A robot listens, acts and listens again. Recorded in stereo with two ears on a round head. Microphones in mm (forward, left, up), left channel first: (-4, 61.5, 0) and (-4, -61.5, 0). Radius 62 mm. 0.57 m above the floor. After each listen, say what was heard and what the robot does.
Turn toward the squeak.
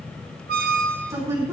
The squeak: about 75° right or 105° right. Turn 75° right.
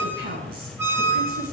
So it is at 15° right. Turn 15° right.
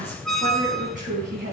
Facing the squeak.